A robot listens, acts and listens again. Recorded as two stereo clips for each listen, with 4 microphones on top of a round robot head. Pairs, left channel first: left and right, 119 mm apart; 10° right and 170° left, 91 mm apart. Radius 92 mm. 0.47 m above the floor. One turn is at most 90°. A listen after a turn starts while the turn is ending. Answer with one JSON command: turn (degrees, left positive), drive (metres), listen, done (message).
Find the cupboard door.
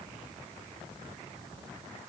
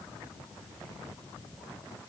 {"listen": true}
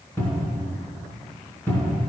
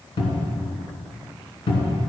{"turn": 15}
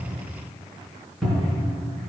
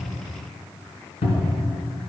{"done": "Found it: a cupboard door, straight ahead."}